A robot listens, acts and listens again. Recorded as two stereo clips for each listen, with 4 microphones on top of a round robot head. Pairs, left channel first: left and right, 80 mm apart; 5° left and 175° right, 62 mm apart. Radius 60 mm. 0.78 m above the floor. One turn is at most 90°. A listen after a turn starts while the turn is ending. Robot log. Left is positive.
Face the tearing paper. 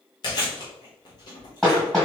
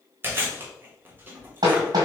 cmd idle
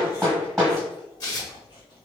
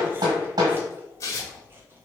note: The tearing paper: 45° left.
cmd yaw +45
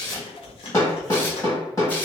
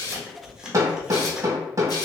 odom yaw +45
cmd idle
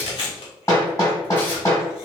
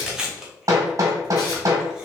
note: The tearing paper is now 20° left.
cmd yaw +20
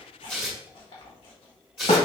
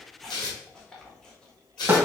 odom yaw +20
end: Found it: tearing paper, straight ahead, 1 to 2 m away.